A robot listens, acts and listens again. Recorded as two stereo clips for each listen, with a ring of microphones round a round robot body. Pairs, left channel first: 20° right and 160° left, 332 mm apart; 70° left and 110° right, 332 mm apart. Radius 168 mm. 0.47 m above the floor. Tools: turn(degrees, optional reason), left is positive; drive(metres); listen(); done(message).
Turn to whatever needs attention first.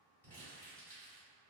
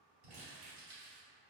listen()
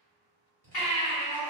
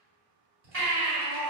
turn(degrees=-60, reason="The baby crying: 60° right.")
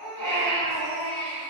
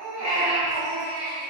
done("Facing the baby crying, 1 to 2 m away.")